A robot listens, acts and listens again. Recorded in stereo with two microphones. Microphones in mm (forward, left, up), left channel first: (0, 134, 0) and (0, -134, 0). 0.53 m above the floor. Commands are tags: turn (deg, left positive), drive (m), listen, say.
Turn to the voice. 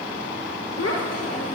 <turn deg="65"/>
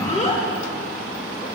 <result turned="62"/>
<turn deg="30"/>
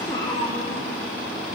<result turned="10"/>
<turn deg="20"/>
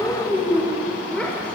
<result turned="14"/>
<say>Found it: a child speaking, straight ahead, 1 to 2 m away.</say>